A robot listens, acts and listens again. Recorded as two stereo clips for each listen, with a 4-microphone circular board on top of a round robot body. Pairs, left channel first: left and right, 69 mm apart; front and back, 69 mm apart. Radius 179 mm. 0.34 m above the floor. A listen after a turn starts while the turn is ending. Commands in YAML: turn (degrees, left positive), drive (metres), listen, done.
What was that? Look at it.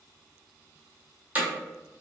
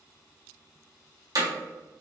turn: -160
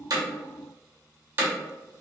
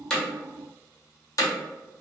turn: -30
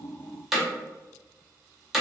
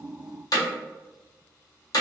done: "Facing the hammering, 1 to 2 m away."